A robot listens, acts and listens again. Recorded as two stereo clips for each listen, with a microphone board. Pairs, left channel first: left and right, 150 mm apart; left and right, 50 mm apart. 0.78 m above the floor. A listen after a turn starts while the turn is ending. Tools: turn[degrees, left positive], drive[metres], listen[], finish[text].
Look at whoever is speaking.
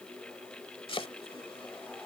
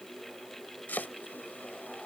Action: listen[]
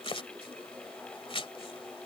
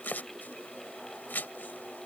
Action: listen[]
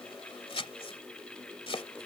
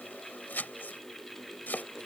Action: finish[I can't make out anyone speaking, only chopping.]